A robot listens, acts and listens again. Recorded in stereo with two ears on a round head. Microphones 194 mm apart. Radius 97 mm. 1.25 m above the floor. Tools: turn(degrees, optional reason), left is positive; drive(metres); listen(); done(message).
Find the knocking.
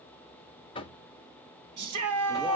turn(degrees=25, reason="The knocking: about 25° left or 155° left.")
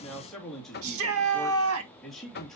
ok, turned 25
turn(degrees=130, reason="So it is at 130° left.")
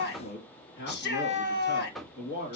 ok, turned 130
done("Facing the knocking.")